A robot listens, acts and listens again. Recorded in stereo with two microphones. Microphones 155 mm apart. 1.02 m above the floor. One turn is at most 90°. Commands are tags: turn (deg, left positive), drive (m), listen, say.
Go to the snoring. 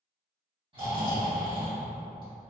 <turn deg="-40"/>
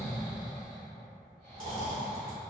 <turn deg="-90"/>
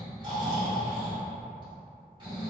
<turn deg="-35"/>
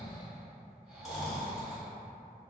<drive m="1.0"/>
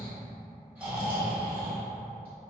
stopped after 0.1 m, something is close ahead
<turn deg="-10"/>
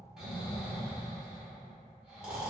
<say>Something is in my way. I am facing the snoring but have not reached it.</say>